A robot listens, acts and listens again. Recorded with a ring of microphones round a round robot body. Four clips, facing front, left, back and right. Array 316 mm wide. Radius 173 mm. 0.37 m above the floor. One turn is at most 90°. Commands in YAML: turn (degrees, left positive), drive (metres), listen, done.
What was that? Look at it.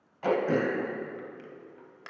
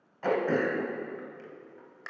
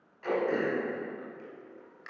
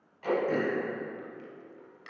turn: 45
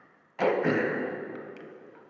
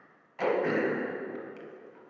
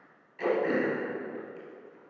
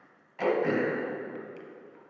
done: "Facing the throat clearing, under 1 m away."